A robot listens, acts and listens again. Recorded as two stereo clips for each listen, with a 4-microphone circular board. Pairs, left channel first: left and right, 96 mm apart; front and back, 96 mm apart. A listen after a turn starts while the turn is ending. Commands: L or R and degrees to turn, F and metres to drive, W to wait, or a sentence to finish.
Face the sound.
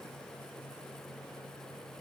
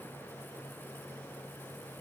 W
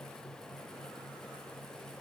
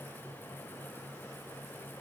W
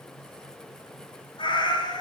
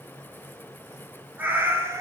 L120
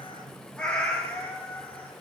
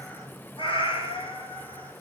L20
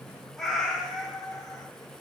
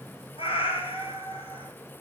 Facing the cat meowing, 2 to 4 m away.